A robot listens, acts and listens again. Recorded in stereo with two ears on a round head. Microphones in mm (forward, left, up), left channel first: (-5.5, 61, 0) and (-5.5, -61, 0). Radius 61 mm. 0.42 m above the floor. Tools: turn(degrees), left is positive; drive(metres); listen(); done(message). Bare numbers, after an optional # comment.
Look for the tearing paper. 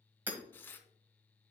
# The tearing paper: about 15° left or 165° left.
turn(15)
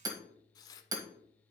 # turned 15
# So it is at 150° left.
turn(150)
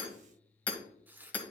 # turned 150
# The tearing paper is now 15° right.
turn(-15)
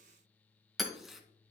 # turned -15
done("Facing the tearing paper, under 1 m away.")